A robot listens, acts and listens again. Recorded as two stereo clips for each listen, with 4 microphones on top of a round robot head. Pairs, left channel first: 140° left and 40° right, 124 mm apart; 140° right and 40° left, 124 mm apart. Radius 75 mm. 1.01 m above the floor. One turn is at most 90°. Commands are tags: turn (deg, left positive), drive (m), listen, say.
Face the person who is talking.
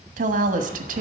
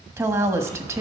<turn deg="-30"/>
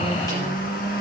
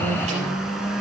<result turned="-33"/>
<listen/>
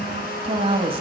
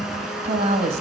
<say>Found it: a woman speaking, straight ahead.</say>